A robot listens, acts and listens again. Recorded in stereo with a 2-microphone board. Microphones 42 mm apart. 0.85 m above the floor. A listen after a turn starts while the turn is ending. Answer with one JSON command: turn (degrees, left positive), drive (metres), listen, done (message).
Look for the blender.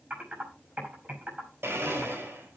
{"turn": -90}
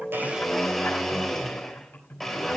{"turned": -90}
{"done": "Facing the blender."}